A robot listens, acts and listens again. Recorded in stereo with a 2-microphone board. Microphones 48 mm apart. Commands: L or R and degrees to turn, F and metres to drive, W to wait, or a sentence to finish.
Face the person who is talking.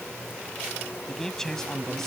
L30
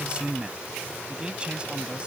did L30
R20
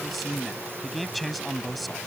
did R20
Facing the man speaking.